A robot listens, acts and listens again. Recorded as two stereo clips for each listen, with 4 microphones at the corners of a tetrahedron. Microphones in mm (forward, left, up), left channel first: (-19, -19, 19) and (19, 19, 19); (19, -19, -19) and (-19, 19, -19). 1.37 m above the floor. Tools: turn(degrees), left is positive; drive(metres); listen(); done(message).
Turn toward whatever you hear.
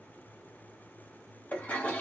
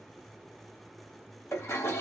turn(degrees=-80)
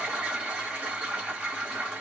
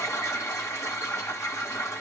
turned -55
turn(degrees=-25)
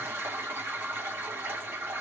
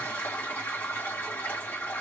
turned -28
done("Found it: a toilet flushing, straight ahead.")